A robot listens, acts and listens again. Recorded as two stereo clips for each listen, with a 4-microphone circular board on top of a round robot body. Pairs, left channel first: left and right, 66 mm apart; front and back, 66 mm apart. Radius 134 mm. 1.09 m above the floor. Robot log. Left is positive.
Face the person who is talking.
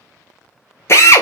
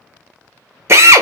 cmd idle
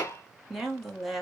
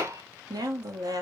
note: The woman speaking: 175° right.
cmd yaw -175
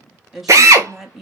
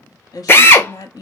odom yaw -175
end: Facing the woman speaking.